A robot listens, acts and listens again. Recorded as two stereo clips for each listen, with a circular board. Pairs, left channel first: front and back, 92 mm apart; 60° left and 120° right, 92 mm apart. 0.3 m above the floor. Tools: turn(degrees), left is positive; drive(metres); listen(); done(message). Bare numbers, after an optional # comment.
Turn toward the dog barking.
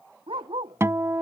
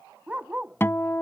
# The dog barking: 160° left.
turn(160)
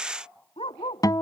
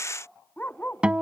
# The dog barking is now 15° right.
turn(-15)
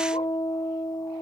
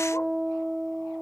listen()
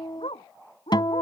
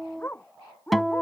# The dog barking is now 10° right.
turn(-10)
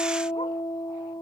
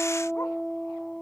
listen()
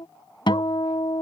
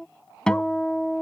listen()
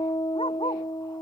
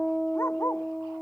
done("I heard a dog barking from this way, but can't make it out now.")